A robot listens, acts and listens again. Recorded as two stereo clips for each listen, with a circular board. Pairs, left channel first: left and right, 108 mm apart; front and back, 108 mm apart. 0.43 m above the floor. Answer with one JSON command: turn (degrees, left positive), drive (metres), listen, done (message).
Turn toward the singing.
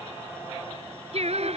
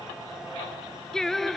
{"turn": -90}
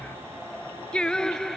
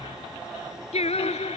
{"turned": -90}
{"done": "Found it: singing, straight ahead."}